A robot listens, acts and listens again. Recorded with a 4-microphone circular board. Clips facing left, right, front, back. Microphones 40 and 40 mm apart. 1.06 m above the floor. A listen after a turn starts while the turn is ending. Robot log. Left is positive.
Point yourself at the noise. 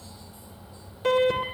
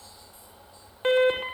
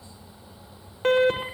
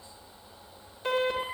note: The alarm: 35° right.
cmd yaw -35
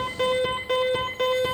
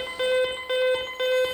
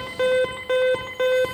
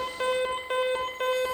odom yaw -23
note: The alarm is now 10° right.
cmd yaw -10
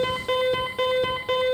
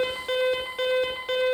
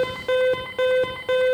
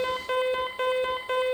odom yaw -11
end: Found it: an alarm, straight ahead, over 4 m away.